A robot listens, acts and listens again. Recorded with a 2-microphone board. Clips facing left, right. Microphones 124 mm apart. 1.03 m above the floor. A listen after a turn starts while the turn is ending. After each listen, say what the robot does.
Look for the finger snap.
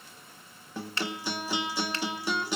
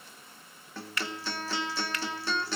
Turn 30° left.
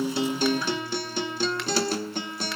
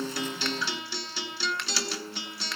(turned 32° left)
Keep listening.
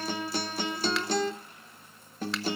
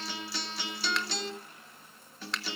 Keep listening.
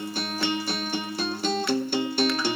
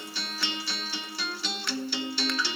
I heard a finger snap, but can't make it out now. It was about 5° right or 120° left.